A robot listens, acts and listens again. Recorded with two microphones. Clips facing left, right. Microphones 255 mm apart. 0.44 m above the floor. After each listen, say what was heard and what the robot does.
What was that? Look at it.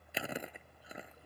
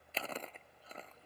Turn 30° left.
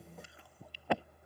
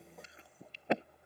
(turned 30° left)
So it is at 20° right. Turn 20° right.
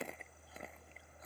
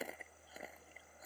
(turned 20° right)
Facing the chewing.